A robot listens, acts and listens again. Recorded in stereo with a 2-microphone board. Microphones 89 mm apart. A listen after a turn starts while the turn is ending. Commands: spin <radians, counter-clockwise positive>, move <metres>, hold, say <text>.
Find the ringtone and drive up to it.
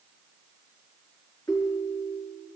spin 0.70
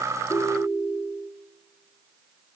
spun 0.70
spin 1.75
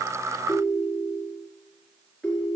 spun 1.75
move 1.0
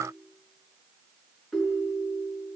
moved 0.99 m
move 1.0
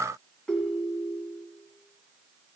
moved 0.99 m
move 1.0
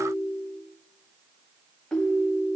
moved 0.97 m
spin 0.17
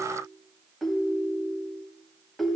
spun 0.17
move 1.0
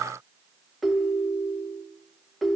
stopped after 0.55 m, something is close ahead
say Arrived at the ringtone, straight ahead.